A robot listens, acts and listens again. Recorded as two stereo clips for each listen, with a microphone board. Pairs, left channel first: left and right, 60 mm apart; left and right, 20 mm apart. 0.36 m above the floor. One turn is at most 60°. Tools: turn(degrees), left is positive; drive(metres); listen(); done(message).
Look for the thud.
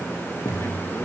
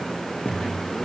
turn(degrees=60)
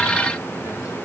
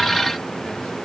turn(degrees=30)
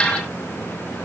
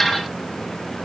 done("I heard a thud from this way, but can't make it out now.")